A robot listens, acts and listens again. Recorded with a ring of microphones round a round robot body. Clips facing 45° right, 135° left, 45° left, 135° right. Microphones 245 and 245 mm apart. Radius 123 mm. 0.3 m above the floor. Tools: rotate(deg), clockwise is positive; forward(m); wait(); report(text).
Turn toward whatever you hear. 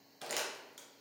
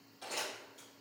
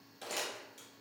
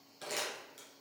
rotate(50)
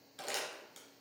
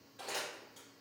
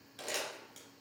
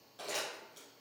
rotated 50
report("Found it: crumpling, straight ahead, 1 to 2 m away.")